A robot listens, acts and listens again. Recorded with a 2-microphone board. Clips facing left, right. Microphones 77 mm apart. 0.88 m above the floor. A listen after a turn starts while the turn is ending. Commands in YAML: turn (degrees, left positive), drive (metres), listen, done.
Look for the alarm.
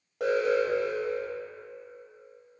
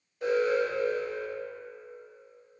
turn: 90
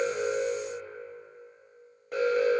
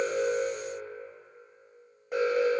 done: "Found it: an alarm, straight ahead, under 1 m away."